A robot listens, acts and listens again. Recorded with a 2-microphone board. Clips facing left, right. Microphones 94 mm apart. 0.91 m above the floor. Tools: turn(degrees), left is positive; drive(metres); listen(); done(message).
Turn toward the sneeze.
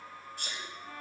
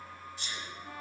turn(degrees=50)
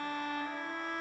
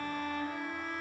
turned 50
listen()
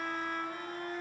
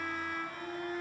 done("I heard a sneeze, but can't make it out now. It was about straight ahead or 80° left.")